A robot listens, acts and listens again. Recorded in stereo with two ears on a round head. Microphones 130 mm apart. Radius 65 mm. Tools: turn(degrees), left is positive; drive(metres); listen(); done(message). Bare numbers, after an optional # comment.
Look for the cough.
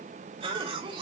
# The cough: about 35° right or 145° right.
turn(-35)
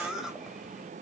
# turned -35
done("Facing the cough, 2 to 4 m away.")